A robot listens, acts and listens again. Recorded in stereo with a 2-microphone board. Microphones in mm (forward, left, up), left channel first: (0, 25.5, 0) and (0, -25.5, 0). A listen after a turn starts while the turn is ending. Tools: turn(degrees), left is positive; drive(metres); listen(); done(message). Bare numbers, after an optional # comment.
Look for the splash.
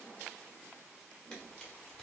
listen()
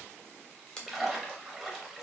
turn(-30)
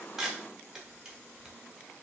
listen()
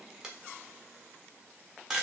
done("I heard a splash, but can't make it out now. It was about 25° left or 145° right.")